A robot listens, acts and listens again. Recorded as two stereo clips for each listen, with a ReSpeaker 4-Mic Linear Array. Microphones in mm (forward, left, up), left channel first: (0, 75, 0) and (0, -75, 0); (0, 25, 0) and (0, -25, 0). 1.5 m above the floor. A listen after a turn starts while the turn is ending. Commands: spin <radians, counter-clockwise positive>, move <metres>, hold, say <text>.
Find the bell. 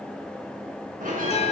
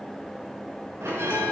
spin -1.13
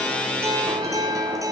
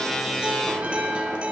hold
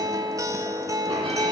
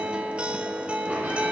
hold
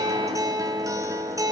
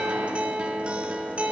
say I heard a bell, but can't make it out now. It was about straight ahead or 50° right.